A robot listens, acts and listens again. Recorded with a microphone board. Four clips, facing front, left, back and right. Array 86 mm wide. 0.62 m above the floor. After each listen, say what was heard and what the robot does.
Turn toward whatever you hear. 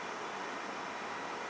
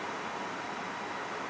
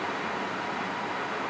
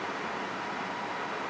Keep listening.
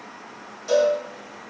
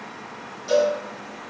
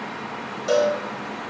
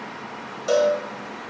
The cowbell: 120° right. Turn 120° right.
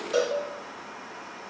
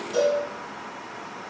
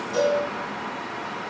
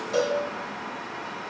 The cowbell is now 30° right. Turn 30° right.
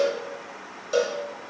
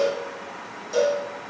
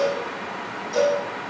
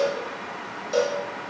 The cowbell is now 25° right. Turn 25° right.
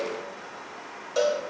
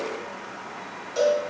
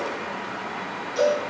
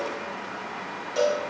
Facing the cowbell.